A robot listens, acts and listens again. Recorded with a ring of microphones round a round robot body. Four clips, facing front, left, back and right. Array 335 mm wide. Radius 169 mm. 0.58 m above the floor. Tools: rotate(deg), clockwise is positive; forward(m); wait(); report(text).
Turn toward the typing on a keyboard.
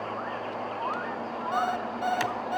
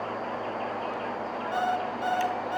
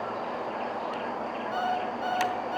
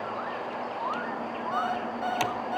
rotate(65)
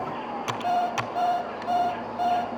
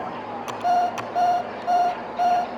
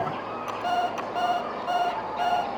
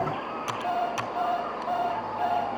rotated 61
report("Found it: typing on a keyboard, straight ahead, under 1 m away.")